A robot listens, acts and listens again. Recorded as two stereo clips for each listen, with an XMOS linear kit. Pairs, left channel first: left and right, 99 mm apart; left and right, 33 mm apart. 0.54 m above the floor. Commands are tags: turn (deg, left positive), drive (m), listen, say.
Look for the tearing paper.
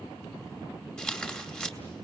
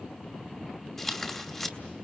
<turn deg="30"/>
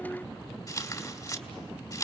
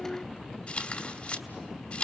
<turn deg="140"/>
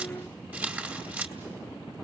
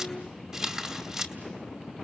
<turn deg="-20"/>
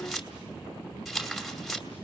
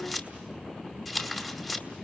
<say>Facing the tearing paper, 2 to 4 m away.</say>